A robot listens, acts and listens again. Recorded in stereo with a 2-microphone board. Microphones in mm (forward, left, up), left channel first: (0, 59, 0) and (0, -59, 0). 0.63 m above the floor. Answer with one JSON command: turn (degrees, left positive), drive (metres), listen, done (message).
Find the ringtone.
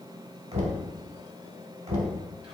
{"listen": true}
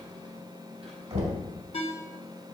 {"turn": 60}
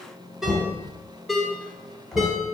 {"done": "Found it: a ringtone, straight ahead, 1 to 2 m away."}